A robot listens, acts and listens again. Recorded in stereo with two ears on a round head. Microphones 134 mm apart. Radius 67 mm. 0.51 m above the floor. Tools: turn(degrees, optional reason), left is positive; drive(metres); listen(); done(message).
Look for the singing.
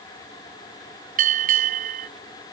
listen()
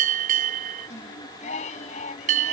turn(degrees=50, reason="The singing: about 50° left or 130° left.")
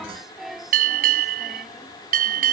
done("Found it: singing, straight ahead.")